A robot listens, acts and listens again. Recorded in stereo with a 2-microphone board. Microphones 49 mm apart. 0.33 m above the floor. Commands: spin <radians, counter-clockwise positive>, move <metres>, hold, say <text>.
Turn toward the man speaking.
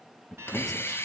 spin 0.52
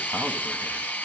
hold
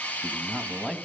spin -0.26
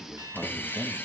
say Facing the man speaking, 2 to 4 m away.